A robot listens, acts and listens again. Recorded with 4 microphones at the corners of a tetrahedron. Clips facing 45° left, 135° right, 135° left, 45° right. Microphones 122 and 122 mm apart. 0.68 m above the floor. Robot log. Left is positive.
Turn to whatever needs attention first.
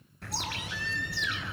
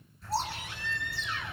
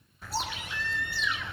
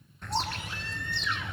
note: The baby crying: 95° right.
cmd yaw -95
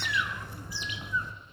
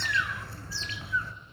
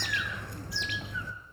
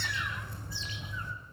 cmd idle
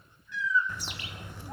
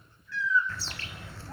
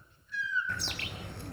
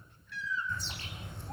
note: The baby crying is now 25° right.
cmd yaw -25
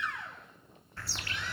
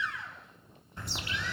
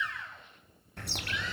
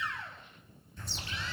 note: The baby crying is now 10° left.
cmd yaw +10
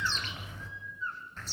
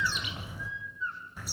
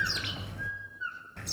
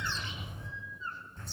end: Found it: a baby crying, straight ahead.